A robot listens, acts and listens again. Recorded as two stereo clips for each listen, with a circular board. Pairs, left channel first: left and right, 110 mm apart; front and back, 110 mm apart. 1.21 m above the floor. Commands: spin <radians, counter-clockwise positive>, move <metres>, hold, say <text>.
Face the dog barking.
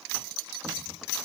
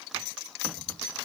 hold
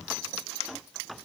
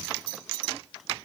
hold
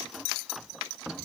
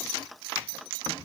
say I can't make out a dog barking to turn to.